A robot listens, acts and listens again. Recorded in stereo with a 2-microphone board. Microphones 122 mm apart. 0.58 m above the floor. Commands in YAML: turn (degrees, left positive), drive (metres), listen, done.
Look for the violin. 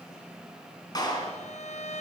turn: 65
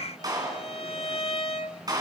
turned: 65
turn: 50
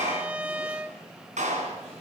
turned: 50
turn: -10
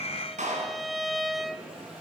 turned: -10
done: "Facing the violin, under 1 m away."